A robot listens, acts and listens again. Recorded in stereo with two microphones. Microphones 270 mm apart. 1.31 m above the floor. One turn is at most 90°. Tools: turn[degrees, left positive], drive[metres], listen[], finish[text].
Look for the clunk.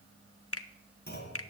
Thought: The clunk: about 35° left or 145° left.
Action: turn[35]
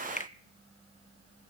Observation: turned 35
Action: listen[]
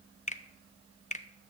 Action: finish[I heard a clunk, but can't make it out now. It was about straight ahead or 110° left.]